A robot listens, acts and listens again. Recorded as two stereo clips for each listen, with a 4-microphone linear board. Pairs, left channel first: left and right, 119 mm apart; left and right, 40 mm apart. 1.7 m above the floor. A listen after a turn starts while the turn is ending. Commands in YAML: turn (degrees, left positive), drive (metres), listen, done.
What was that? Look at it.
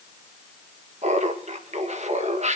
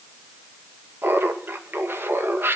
turn: -90
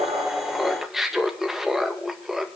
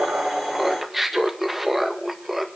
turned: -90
done: "Found it: laughter, straight ahead, 1 to 2 m away."